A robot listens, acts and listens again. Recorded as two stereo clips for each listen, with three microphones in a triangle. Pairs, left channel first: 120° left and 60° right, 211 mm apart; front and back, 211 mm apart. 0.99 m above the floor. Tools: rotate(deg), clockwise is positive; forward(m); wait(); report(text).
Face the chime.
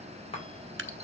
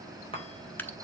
rotate(-60)
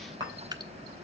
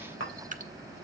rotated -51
rotate(-10)
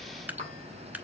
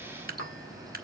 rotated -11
wait()
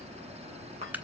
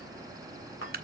report("Found it: a chime, straight ahead.")